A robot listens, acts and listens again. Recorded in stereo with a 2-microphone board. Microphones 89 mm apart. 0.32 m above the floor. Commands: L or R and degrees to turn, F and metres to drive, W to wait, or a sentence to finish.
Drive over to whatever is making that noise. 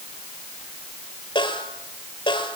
L70
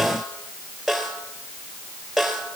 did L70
F1.0
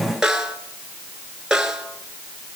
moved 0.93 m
F1.0
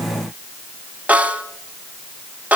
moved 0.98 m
R15
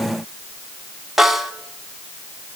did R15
F1.0
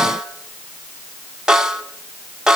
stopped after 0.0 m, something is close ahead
I am next to the snare drum.